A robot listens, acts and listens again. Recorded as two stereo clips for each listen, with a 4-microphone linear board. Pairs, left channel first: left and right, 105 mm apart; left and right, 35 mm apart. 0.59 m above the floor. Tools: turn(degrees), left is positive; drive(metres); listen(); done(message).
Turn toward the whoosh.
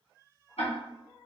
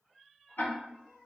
listen()
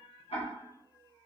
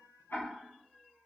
listen()
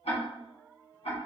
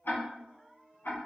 done("I can't make out a whoosh, only ticking.")